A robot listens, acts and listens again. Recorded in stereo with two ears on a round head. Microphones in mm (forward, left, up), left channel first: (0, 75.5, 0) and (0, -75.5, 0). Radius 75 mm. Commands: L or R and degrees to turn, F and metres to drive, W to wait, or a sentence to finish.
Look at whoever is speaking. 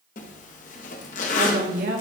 R55
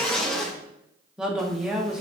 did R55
Facing the woman speaking.